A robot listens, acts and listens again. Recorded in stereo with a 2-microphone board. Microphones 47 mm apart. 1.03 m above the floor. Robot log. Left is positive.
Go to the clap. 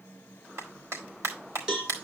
cmd yaw -90
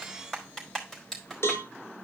cmd fwd 1.0
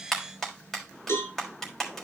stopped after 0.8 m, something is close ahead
end: Something is in my way. I am facing the clap but have not reached it.